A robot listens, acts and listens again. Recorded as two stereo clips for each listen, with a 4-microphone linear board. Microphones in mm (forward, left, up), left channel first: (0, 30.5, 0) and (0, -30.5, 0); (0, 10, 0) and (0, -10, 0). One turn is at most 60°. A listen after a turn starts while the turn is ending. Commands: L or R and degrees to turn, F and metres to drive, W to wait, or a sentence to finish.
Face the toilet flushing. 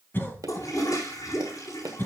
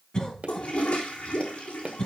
L60
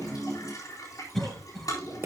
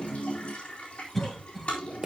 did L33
L60
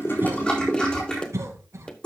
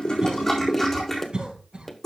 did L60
L15
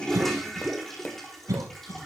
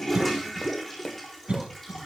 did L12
Found it: a toilet flushing, straight ahead.